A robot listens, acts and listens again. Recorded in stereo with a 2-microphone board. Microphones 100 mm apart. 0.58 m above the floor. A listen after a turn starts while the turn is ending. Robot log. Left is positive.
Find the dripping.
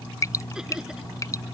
note: The dripping: about 30° left or 150° left.
cmd yaw +30
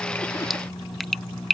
end: Found it: dripping, straight ahead.